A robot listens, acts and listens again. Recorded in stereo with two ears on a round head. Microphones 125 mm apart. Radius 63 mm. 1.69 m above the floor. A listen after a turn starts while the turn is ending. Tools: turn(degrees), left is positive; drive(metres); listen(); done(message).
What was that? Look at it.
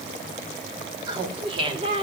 turn(degrees=-40)
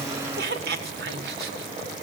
turn(degrees=-95)
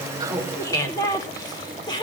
turn(degrees=30)
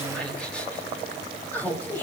turn(degrees=15)
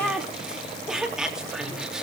done("Facing the laughter.")